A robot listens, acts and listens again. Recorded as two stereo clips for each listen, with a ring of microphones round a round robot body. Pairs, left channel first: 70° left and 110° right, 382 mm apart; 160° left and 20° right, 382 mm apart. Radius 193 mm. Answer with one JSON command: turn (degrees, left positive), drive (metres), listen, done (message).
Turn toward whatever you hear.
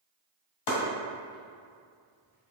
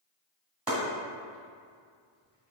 {"turn": 65}
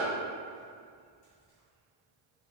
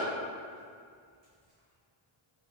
{"listen": true}
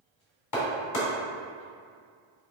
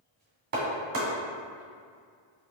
{"turn": 30}
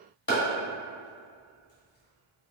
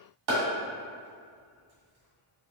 {"done": "Found it: chopping, straight ahead."}